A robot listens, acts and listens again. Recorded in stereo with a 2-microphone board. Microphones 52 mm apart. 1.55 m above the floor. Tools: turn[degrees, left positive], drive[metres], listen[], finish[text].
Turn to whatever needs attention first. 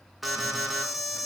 Action: turn[-30]
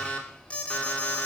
Thought: So it is at 20° left.
Action: turn[20]
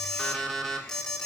Thought: The alarm is now 10° left.
Action: turn[10]
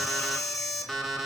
Action: finish[Found it: an alarm, straight ahead.]